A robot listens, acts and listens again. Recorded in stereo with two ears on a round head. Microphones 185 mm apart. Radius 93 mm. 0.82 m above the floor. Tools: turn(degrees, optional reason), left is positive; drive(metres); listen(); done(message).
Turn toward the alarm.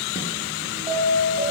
turn(degrees=-25, reason="The alarm: about 25° right or 155° right.")
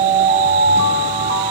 turn(degrees=-125, reason="So it is at 125° right.")
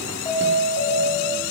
turn(degrees=25, reason="The alarm is now 25° left.")
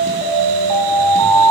done("Facing the alarm, over 4 m away.")